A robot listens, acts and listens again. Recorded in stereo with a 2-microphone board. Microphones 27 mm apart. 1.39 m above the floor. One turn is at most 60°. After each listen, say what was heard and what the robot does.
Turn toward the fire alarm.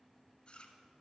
Keep listening.
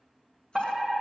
The fire alarm: about 25° right or 155° right. Turn 25° right.
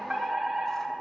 So it is at 125° right. Turn 60° right.
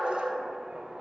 The fire alarm is now 60° right. Turn 60° right.
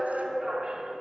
The fire alarm is now 15° right. Turn 15° right.
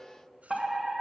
Facing the fire alarm, 2 to 4 m away.